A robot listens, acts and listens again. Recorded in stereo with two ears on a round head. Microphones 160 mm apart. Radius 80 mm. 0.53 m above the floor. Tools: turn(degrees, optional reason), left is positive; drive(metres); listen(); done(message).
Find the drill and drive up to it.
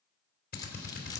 turn(degrees=55, reason="The drill: about 55° left or 125° left.")
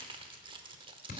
turn(degrees=60, reason="So it is at 60° left.")
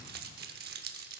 listen()
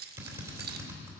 turn(degrees=-15, reason="The drill is now 15° right.")
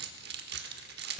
listen()
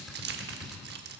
drive(metres=1.0)
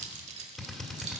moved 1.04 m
drive(metres=1.0)
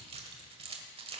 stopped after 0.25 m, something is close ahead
listen()
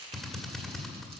done("I am next to the drill.")